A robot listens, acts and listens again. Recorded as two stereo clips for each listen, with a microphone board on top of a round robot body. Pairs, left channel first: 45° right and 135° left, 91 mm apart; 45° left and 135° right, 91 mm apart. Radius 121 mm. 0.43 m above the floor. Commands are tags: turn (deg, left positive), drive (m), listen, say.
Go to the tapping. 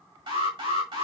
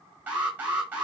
<listen/>
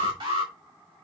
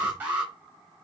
<listen/>
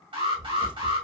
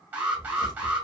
<turn deg="80"/>
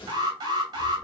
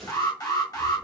<listen/>
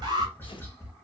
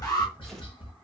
<turn deg="20"/>
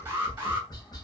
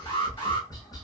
<drive m="1.0"/>
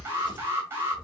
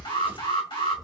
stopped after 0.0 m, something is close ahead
<say>Something is in my way. I am facing the tapping but have not reached it.</say>